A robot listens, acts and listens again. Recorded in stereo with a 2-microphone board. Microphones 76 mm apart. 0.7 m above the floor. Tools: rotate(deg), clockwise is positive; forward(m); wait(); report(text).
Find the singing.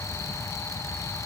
wait()
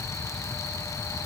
wait()
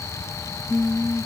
rotate(-30)
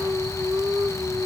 rotate(25)
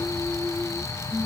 report("Facing the singing.")